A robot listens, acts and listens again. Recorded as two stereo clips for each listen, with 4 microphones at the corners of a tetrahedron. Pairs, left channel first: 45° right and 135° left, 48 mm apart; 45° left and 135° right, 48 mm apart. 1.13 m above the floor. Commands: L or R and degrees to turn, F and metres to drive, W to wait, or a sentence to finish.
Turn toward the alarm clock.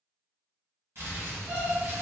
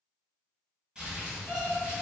L70
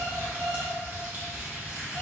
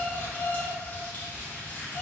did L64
Facing the alarm clock, 1 to 2 m away.